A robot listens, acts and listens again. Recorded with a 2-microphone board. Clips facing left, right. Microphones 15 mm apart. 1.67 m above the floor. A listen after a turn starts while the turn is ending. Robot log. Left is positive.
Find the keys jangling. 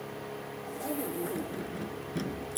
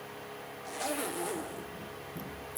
note: The keys jangling: about 45° left or 135° left.
cmd yaw +45
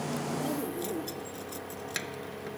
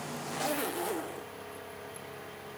note: So it is at 100° left.
cmd yaw +100
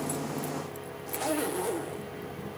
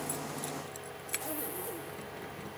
cmd idle
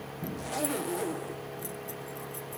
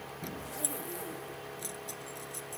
note: The keys jangling is now 30° right.
cmd yaw -30
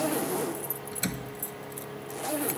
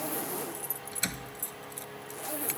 end: Found it: keys jangling, straight ahead.